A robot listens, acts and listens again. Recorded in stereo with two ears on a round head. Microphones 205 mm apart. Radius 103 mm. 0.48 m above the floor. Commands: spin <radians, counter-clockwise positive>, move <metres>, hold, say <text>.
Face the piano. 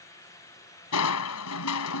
hold
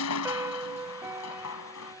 spin -0.52
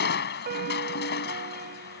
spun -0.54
spin -2.36
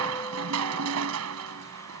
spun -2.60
spin 0.26
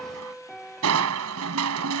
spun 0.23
say Found it: a piano, straight ahead.